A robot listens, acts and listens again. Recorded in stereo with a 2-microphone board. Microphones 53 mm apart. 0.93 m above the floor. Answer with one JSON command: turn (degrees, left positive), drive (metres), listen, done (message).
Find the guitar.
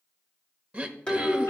{"turn": 15}
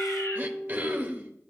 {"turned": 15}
{"done": "Found it: a guitar, straight ahead."}